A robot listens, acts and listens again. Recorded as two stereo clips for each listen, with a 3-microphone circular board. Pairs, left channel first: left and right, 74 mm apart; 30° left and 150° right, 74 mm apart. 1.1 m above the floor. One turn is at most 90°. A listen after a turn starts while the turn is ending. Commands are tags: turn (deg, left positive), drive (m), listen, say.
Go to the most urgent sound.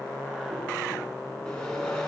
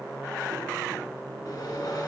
<listen/>
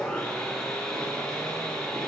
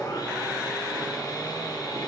<listen/>
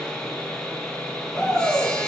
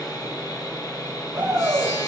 <turn deg="90"/>
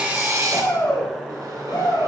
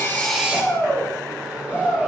<turn deg="85"/>
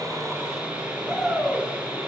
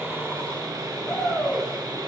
<drive m="1.0"/>
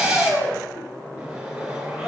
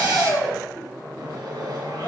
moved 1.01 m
<turn deg="10"/>
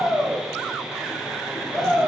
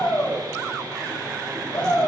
<drive m="1.0"/>
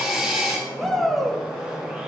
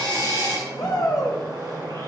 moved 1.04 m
<drive m="1.0"/>
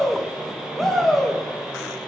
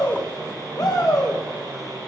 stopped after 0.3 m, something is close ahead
<say>I am next to the shout.</say>